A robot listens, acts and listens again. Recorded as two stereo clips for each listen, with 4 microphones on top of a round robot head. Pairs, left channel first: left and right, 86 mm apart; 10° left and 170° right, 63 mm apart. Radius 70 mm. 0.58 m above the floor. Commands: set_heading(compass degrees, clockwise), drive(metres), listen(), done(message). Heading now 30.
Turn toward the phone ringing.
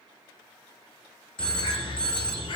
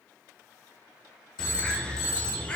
set_heading(20)
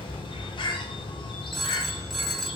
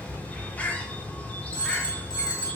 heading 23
done("Found it: a phone ringing, straight ahead.")